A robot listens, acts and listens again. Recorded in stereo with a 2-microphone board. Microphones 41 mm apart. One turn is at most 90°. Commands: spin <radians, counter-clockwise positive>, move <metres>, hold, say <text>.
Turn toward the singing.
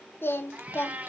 spin 1.13
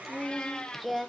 say Found it: singing, straight ahead, under 1 m away.